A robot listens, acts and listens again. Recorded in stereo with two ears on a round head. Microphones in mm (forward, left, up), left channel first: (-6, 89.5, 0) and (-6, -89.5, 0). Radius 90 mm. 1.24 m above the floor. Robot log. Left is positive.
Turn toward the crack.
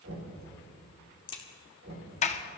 note: The crack: about 25° left or 155° left.
cmd yaw +25
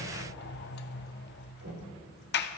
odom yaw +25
cmd idle
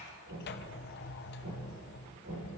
end: I heard a crack, but can't make it out now. It was about straight ahead or 130° left.